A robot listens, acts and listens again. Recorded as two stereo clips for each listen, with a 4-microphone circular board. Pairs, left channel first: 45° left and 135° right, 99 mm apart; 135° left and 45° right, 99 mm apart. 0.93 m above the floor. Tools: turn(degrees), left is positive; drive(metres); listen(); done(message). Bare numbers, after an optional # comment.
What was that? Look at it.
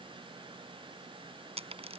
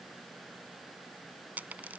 # The dropped coin: 120° right.
turn(-120)
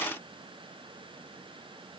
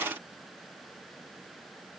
done("I heard a dropped coin from this way, but can't make it out now.")